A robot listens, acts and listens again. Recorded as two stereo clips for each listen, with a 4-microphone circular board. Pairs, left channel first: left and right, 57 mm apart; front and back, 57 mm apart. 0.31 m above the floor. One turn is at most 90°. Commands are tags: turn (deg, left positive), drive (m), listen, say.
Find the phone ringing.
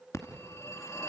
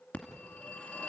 <turn deg="60"/>
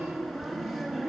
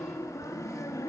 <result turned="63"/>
<say>Facing the phone ringing.</say>